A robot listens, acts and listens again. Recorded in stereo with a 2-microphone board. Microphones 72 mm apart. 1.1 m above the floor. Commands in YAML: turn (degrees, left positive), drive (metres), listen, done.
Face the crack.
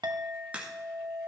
turn: -20
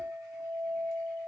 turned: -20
listen: true
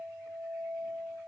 done: "I heard a crack, but can't make it out now. It was about straight ahead or 140° right."